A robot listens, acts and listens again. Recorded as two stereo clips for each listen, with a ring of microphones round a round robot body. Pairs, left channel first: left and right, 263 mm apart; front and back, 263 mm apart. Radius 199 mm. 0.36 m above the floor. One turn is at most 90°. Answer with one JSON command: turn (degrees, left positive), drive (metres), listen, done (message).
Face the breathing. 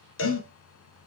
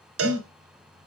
{"turn": 90}
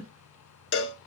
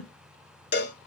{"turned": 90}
{"turn": 15}
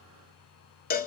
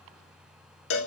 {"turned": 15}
{"listen": true}
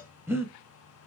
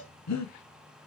{"turn": -10}
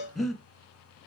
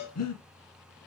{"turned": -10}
{"done": "Found it: breathing, straight ahead, 1 to 2 m away."}